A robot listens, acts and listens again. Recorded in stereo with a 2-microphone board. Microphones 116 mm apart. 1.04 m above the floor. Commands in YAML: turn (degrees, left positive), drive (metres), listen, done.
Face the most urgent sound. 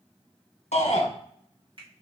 turn: 65
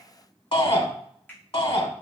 turn: 50
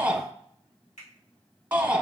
turn: -15
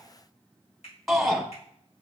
done: "Facing the shout."